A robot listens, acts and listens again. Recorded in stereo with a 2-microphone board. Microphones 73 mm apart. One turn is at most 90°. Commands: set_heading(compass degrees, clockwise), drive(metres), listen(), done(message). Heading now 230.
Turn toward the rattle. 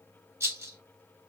set_heading(265)
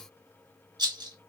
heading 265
set_heading(355)
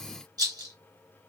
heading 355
set_heading(55)
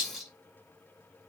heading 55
done("Found it: a rattle, straight ahead.")